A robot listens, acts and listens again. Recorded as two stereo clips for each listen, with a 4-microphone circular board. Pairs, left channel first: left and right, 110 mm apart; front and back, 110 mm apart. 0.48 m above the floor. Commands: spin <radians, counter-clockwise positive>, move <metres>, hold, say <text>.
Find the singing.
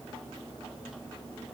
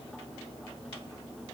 hold
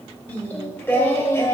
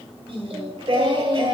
spin 2.62
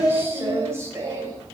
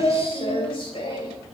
spin -0.61
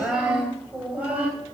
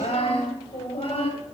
spin -0.26
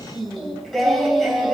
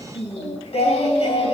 say Facing the singing.